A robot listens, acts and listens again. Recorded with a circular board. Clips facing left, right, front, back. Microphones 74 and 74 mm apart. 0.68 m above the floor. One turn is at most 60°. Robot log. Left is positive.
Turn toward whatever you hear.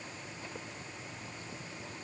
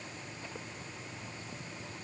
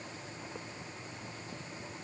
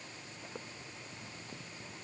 cmd idle
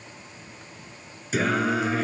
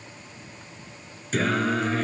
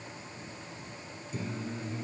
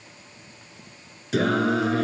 note: The singing: 175° left.
cmd yaw +60
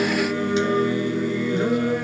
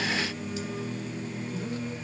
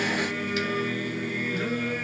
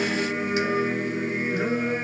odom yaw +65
note: The singing is now 110° left.
cmd yaw +60
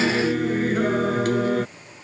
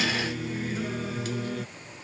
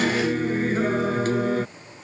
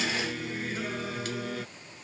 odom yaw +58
note: The singing is now 55° left.
cmd yaw +55
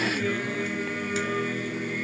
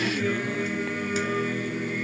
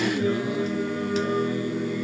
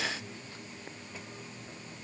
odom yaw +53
end: Found it: singing, straight ahead.